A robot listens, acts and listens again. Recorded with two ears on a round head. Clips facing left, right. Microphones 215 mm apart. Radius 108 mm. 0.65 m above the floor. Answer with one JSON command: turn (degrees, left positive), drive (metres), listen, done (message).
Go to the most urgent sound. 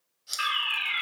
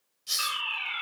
{"turn": 30}
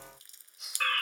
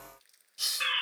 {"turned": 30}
{"turn": 10}
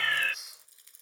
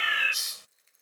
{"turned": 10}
{"drive": 1.0}
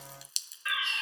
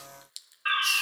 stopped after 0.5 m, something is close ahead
{"turn": -10}
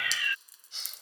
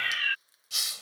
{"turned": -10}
{"done": "Something is in my way. I am facing the fire alarm but have not reached it."}